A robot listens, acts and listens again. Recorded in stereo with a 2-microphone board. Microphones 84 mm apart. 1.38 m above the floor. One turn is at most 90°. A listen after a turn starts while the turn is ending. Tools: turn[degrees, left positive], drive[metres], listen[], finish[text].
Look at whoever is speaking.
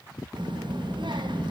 Thought: The child speaking: about 70° right or 110° right.
Action: turn[-70]
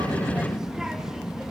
Action: finish[Found it: a child speaking, straight ahead, 1 to 2 m away.]